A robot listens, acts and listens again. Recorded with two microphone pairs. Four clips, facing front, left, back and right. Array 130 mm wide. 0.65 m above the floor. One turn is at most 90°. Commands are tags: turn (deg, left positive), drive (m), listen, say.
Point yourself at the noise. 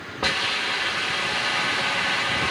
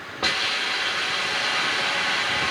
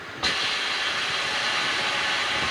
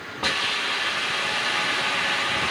<turn deg="45"/>
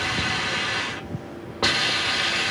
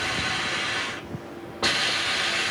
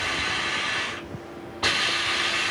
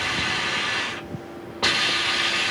<say>Found it: a hiss, straight ahead.</say>